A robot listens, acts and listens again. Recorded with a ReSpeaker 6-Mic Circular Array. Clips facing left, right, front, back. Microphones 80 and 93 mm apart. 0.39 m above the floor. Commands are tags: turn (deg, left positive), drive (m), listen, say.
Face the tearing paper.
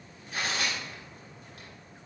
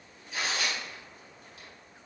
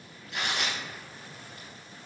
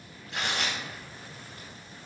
<turn deg="125"/>
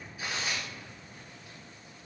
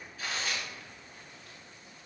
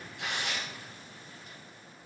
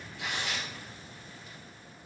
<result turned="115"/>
<turn deg="10"/>
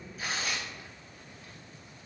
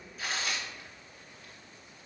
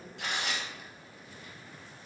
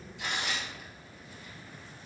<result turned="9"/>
<say>Facing the tearing paper.</say>